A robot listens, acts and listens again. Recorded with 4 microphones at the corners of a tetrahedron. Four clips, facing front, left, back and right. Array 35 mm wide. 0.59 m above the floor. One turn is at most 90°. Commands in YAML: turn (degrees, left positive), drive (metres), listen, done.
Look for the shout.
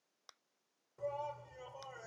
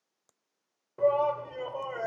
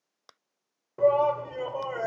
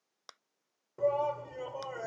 turn: 90
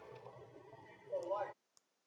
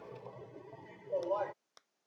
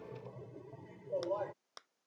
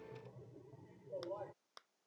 turn: 80
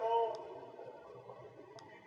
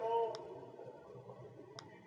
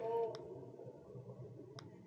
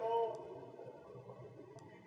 done: "Facing the shout."